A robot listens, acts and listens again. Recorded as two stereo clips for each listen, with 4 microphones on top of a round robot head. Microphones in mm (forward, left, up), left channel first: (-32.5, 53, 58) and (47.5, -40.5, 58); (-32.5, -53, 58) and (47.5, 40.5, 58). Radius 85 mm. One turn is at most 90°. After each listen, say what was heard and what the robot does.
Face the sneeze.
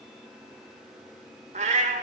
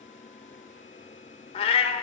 Keep listening.
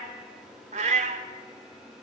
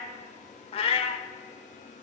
Keep listening.
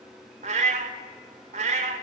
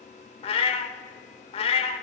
I can't make out a sneeze to turn to.